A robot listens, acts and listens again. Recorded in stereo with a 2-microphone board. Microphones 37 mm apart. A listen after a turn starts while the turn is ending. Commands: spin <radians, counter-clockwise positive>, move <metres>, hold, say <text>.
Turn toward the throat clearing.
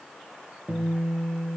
hold
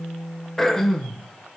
spin 0.52
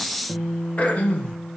spin 2.44
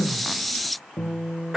spin -0.26
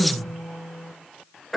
say Facing the throat clearing.